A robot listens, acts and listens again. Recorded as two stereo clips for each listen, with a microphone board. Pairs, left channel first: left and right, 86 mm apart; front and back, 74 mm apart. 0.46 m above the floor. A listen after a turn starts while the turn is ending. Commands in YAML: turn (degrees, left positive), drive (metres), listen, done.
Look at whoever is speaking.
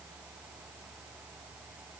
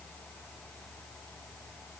listen: true
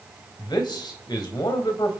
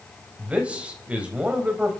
turn: 110
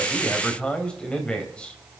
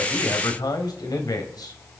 turn: 15
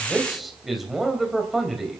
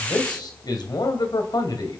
done: "Found it: a man speaking, straight ahead."